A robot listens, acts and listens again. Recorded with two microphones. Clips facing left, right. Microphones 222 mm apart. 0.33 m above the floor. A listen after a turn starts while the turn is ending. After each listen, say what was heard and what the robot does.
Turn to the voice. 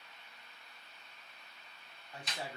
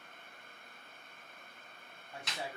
The man speaking: about 20° right or 160° right. Turn 20° right.
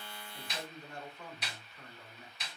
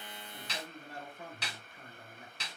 So it is at 135° right. Turn 135° right.
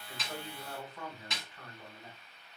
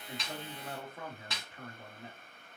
The man speaking is now 30° right. Turn 30° right.
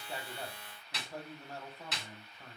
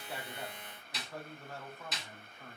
The man speaking is now 20° left. Turn 20° left.
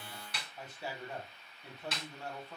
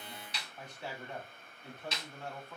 Facing the man speaking, 1 to 2 m away.